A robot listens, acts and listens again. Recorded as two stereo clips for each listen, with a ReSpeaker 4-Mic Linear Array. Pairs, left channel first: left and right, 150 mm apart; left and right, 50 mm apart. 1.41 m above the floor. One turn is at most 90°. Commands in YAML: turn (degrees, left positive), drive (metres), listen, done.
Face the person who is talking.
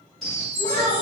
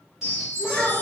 turn: 30
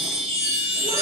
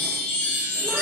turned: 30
listen: true
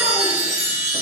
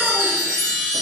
listen: true
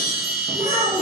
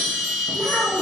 turn: 90
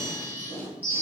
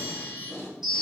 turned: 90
turn: 25
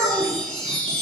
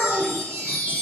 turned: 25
done: "Facing the child speaking, 1 to 2 m away."